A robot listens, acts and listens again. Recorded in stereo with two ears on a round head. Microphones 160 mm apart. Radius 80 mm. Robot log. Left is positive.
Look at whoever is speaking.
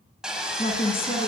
note: The woman speaking: about 35° left or 145° left.
cmd yaw +35
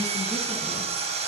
cmd idle
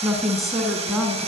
end: Found it: a woman speaking, straight ahead, over 4 m away.